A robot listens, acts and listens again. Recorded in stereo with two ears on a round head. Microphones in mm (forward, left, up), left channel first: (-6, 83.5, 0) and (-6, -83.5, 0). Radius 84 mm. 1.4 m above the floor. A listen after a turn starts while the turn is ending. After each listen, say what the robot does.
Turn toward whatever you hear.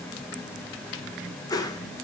Turn 20° left.
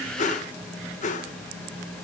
Turn 140° left.
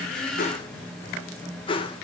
Turn 25° left.
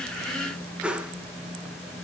Found it: a whoosh, straight ahead, 1 to 2 m away.